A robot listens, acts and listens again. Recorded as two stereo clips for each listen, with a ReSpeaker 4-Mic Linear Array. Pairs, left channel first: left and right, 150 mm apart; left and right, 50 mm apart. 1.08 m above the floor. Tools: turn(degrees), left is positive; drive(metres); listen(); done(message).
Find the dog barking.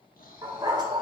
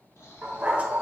turn(degrees=-30)
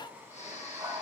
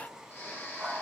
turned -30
turn(degrees=-25)
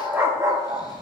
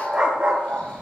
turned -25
turn(degrees=-25)
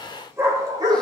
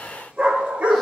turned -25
turn(degrees=-25)
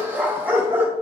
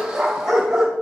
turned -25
turn(degrees=-15)
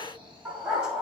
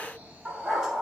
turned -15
done("Facing the dog barking.")